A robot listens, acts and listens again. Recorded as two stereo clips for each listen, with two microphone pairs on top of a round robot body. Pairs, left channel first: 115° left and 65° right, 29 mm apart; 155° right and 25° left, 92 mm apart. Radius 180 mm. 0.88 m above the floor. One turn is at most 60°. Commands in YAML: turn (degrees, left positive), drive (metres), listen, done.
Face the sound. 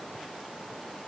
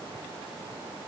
listen: true
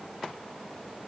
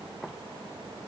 listen: true
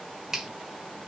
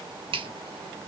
turn: 10
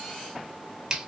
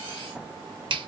done: "Facing the finger snap."